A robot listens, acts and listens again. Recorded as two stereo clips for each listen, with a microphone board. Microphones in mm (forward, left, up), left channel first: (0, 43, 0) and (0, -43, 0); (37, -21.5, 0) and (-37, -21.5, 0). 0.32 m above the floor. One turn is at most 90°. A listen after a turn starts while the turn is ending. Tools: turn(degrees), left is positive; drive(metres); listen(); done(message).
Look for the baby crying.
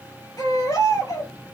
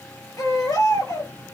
turn(degrees=40)
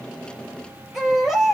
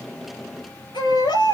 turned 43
done("Facing the baby crying, over 4 m away.")